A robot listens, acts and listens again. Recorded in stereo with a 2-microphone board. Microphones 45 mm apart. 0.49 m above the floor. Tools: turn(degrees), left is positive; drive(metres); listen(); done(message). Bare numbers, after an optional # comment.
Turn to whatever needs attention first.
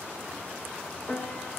listen()
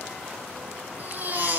# The baby crying: about 40° right or 140° right.
turn(-40)
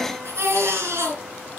# So it is at 100° right.
turn(-100)
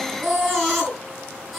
done("Found it: a baby crying, straight ahead, over 4 m away.")